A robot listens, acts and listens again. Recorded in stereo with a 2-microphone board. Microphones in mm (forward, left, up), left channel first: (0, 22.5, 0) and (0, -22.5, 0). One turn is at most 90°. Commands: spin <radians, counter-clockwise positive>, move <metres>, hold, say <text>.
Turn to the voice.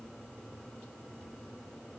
hold
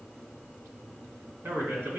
spin -1.05
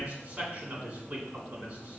spin -0.70
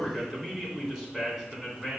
spin -0.17
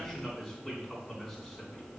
say Facing the man speaking.